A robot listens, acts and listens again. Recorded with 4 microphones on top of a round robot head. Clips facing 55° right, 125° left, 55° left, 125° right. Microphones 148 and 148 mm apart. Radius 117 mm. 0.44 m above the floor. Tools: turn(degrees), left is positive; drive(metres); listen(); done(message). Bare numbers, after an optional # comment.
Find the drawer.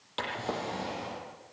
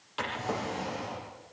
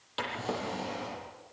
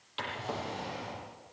# The drawer: 10° left.
turn(10)
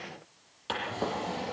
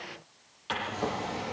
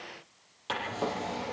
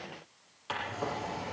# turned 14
done("Found it: a drawer, straight ahead, over 4 m away.")